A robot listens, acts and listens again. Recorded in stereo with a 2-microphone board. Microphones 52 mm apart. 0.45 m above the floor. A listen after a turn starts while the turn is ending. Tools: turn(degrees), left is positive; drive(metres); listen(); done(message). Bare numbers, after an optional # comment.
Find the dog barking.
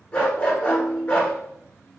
# The dog barking: about 25° left or 155° left.
turn(25)
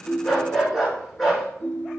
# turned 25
done("Found it: a dog barking, straight ahead, 1 to 2 m away.")